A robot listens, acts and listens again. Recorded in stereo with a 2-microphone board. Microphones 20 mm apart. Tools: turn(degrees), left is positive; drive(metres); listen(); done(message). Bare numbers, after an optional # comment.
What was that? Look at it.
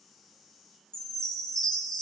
# The chime: about 45° left or 135° left.
turn(45)
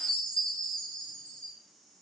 # So it is at 95° left.
turn(95)
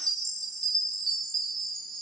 # The chime is now 30° left.
turn(30)
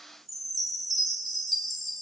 done("Found it: a chime, straight ahead.")